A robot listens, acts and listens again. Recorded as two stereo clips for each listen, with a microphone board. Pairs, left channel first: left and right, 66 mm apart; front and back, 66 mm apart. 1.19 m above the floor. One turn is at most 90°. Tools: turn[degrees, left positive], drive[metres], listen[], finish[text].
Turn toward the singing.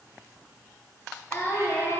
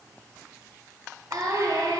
Thought: The singing: 155° left.
Action: turn[90]
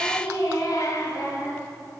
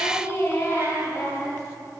Thought: The singing is now 55° left.
Action: turn[55]
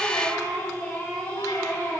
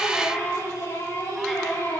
Thought: The singing is now 20° left.
Action: turn[20]
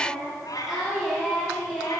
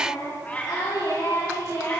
Action: finish[Found it: singing, straight ahead.]